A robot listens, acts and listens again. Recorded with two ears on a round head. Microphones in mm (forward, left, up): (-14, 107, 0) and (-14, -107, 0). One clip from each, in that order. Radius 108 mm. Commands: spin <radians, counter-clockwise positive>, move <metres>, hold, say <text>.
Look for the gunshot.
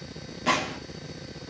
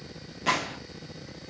spin -0.52
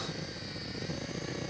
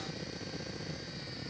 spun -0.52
hold
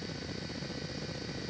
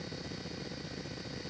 say I heard a gunshot, but can't make it out now. It was about 20° left or 140° right.